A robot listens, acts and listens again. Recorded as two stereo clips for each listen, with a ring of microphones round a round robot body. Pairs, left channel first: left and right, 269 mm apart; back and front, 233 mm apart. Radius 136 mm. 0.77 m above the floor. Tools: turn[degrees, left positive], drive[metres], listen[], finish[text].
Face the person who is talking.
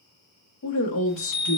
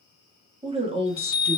Thought: The woman speaking: 65° left.
Action: turn[65]
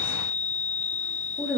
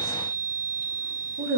Action: finish[Found it: a woman speaking, straight ahead.]